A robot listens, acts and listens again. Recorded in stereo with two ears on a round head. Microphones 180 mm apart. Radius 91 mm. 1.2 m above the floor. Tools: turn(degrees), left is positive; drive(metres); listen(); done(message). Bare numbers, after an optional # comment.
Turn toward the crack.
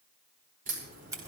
# The crack: about 40° right or 140° right.
turn(-40)
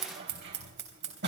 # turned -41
listen()
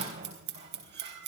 done("I heard a crack, but can't make it out now. It was about straight ahead or 100° right.")